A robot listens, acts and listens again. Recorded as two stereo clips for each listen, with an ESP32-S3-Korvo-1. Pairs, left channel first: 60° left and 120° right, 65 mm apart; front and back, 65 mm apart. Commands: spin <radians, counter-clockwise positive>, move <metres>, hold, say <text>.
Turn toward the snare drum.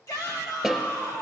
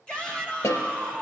spin -0.52
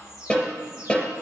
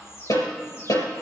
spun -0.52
say Found it: a snare drum, straight ahead.